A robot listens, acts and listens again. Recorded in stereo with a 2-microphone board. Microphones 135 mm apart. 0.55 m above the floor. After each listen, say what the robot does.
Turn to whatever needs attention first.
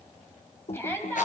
Turn 20° left.
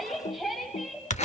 Facing the shout, 2 to 4 m away.